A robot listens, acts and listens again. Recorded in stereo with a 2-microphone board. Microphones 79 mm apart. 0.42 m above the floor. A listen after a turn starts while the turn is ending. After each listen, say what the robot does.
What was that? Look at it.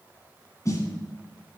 Turn 45° left.
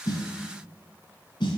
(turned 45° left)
Turn 90° left.
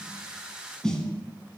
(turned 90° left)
Turn 10° left.
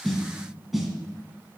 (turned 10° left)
Facing the snare drum, 1 to 2 m away.